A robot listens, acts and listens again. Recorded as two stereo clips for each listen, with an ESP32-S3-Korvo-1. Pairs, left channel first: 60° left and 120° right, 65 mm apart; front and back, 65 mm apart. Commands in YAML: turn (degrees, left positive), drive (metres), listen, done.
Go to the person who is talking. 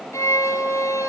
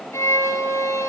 listen: true
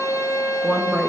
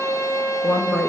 turn: -30
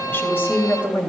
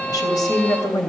drive: 1.0
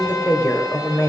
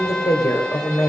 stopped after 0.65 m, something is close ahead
done: "Something is in my way. I am facing the woman speaking but have not reached it."